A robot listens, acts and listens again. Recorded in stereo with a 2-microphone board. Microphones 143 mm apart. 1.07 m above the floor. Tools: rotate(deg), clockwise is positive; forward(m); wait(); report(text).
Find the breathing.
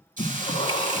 rotate(-40)
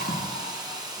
rotate(-100)
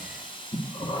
rotate(-35)
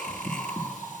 report("Found it: breathing, straight ahead, 1 to 2 m away.")